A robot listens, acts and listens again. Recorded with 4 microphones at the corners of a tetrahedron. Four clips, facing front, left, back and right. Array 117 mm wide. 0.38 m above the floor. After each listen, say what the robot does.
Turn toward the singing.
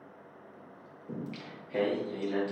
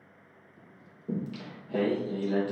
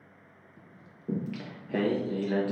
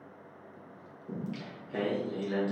Turn 175° left.
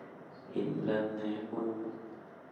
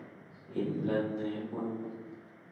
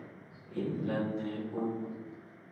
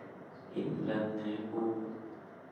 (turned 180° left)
Turn 25° left.
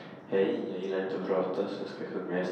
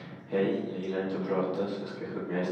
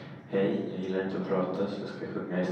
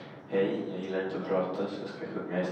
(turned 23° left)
Found it: singing, straight ahead, 2 to 4 m away.